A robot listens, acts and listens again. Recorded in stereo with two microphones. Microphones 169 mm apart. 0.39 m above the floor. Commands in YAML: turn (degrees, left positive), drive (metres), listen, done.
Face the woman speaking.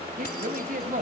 turn: -55
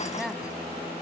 done: "Found it: a woman speaking, straight ahead."